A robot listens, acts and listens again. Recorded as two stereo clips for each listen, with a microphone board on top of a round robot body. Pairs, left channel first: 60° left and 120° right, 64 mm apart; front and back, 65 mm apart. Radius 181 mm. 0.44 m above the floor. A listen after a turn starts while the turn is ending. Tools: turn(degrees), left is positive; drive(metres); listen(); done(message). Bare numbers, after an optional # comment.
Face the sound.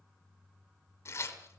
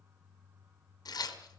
# The tearing paper: 15° left.
turn(15)
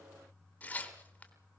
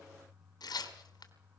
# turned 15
done("Facing the tearing paper, 2 to 4 m away.")